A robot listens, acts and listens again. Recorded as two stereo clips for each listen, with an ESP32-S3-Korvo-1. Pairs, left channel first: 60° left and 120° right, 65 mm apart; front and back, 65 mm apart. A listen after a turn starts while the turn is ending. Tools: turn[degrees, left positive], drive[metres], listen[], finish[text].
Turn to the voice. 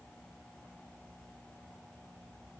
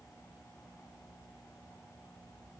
Action: listen[]
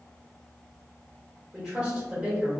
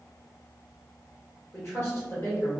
Thought: The woman speaking: 45° right.
Action: turn[-45]
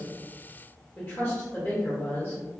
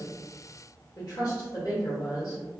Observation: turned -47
Action: finish[Facing the woman speaking.]